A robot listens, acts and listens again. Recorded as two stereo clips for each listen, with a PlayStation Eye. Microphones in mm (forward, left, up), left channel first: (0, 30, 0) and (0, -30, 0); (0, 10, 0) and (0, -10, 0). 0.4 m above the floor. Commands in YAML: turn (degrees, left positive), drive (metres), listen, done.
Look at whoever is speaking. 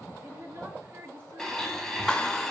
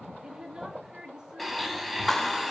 turn: -40
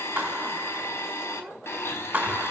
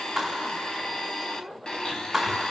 listen: true
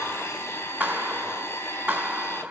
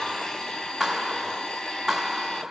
listen: true
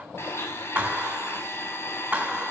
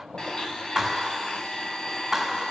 done: "I heard a woman speaking, but can't make it out now. It was about straight ahead or 100° right."